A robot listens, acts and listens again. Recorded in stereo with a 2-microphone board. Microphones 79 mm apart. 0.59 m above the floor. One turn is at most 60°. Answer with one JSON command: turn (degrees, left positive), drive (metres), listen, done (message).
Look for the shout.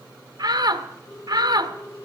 {"turn": -60}
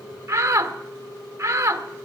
{"turn": -40}
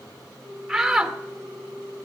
{"turn": -10}
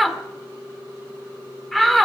{"done": "Found it: a shout, straight ahead, 1 to 2 m away."}